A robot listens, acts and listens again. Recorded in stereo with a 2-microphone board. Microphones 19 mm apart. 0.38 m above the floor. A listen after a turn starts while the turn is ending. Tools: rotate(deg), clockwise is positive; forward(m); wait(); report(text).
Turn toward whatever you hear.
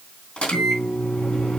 rotate(-60)
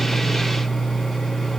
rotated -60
report("Found it: a microwave, straight ahead, 2 to 4 m away.")